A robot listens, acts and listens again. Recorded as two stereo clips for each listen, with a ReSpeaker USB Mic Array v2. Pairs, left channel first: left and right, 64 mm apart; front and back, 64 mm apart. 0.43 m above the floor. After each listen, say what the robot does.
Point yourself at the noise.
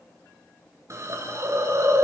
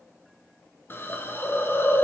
Turn 50° right.
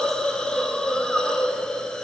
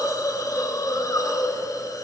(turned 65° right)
Turn 15° left.
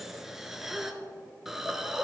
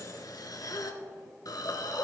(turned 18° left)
Facing the hiss, 1 to 2 m away.